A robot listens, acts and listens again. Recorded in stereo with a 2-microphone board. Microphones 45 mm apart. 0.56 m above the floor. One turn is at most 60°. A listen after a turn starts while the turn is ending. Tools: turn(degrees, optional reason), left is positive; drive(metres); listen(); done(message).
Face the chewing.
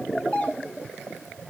listen()
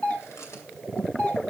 listen()
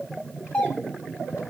done("I can't make out chewing to turn to.")